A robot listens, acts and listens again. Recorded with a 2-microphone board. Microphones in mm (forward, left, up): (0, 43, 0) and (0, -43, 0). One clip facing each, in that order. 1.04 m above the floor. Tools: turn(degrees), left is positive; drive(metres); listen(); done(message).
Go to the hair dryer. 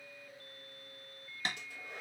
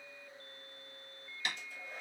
turn(degrees=90)
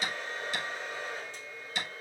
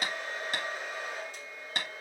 turn(degrees=-10)
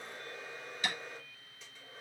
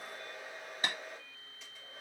drive(metres=1.0)
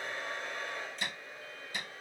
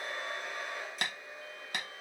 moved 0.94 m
drive(metres=1.0)
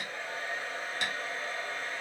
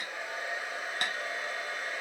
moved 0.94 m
turn(degrees=-15)
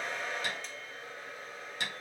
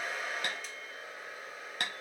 drive(metres=1.0)
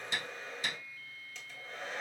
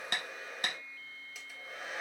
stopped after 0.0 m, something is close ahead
done("I am next to the hair dryer.")